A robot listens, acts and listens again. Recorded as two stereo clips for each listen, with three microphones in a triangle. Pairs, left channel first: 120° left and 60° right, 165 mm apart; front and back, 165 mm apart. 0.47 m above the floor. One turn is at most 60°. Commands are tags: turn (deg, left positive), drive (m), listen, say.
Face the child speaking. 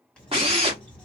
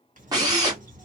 <turn deg="60"/>
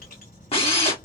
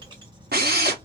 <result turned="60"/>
<turn deg="60"/>
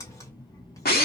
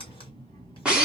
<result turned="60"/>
<turn deg="60"/>
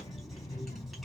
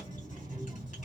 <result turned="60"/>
<turn deg="60"/>
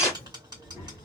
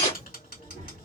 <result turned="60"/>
<turn deg="45"/>
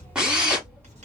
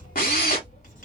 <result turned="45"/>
<turn deg="30"/>
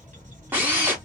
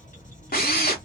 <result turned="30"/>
<turn deg="20"/>
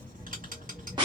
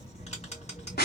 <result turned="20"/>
<say>Facing the child speaking.</say>